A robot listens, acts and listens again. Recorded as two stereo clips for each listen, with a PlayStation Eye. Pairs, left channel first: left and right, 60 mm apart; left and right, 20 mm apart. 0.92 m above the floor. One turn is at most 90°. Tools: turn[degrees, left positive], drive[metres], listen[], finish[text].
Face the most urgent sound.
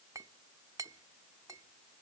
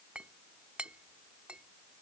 Action: listen[]
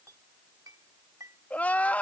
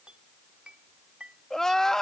Thought: The crying: about 25° left or 155° left.
Action: turn[25]
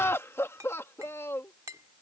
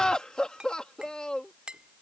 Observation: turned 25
Thought: So it is at 125° left.
Action: turn[90]
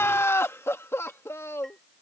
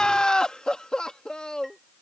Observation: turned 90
Thought: The crying is now 55° left.
Action: turn[55]
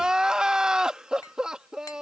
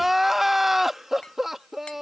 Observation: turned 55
Thought: The crying is now 15° right.
Action: turn[-15]
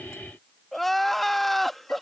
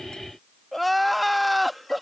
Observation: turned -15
Action: finish[Facing the crying.]